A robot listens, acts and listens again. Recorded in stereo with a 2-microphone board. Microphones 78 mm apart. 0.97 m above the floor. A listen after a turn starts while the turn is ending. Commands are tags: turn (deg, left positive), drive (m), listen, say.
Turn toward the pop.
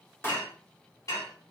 <turn deg="30"/>
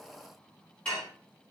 <listen/>
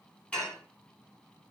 <say>I heard a pop, but can't make it out now. It was about straight ahead or 120° left.</say>